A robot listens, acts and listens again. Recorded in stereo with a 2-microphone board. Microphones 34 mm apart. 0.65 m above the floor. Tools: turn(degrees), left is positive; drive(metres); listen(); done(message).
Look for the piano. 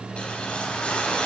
listen()
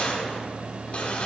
listen()
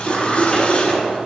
done("I can't make out a piano, only a cough and a whoosh.")